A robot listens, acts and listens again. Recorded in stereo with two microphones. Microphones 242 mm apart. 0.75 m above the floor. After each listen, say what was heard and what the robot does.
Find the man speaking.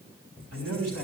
Turn 90° right.
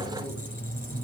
Keep listening.
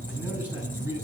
The man speaking is now 10° right. Turn 10° right.
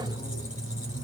Keep listening.
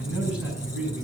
Facing the man speaking, over 4 m away.